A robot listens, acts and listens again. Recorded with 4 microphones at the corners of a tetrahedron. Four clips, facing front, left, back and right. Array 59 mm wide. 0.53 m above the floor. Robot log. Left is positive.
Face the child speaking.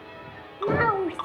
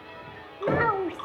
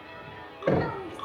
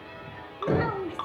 note: The child speaking: 35° left.
cmd yaw +35
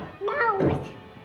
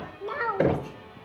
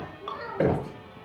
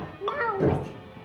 end: Facing the child speaking.